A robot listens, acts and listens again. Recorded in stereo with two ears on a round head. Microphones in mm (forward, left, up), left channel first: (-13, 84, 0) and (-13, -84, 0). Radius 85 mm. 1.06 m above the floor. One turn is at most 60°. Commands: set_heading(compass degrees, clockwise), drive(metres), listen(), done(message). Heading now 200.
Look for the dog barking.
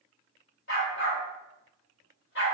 set_heading(145)
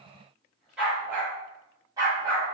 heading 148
set_heading(173)
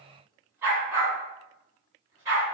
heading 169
set_heading(184)
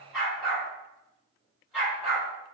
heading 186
done("Found it: a dog barking, straight ahead, 2 to 4 m away.")